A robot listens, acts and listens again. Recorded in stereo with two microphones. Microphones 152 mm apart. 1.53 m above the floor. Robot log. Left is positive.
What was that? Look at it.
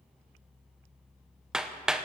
cmd yaw -30
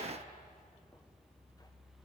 cmd idle
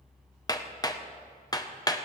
note: So it is at 25° left.
cmd yaw +25
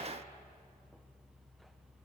cmd idle
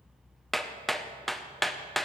end: Found it: hammering, straight ahead.